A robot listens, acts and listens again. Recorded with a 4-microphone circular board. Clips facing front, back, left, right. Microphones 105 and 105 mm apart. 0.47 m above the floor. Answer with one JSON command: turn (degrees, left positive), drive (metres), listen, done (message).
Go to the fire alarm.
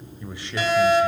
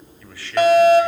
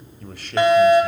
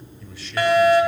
{"turn": 155}
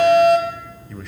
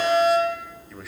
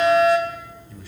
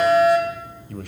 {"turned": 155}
{"drive": 1.0}
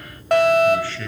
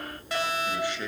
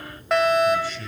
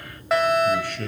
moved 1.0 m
{"drive": 1.0}
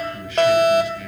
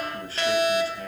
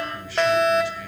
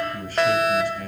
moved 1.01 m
{"drive": 1.0}
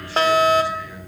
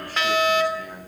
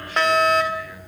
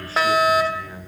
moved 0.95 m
{"turn": -10}
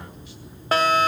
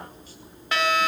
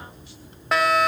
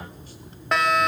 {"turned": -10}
{"drive": 1.0}
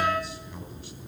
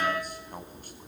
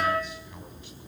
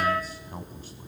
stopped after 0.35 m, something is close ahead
{"done": "I am next to the fire alarm."}